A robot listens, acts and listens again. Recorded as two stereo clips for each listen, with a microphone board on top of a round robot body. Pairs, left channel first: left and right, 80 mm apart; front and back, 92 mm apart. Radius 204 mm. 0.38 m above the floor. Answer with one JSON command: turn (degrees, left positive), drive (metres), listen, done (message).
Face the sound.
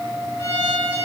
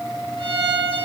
{"turn": 150}
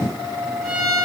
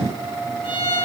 {"done": "Facing the violin, over 4 m away."}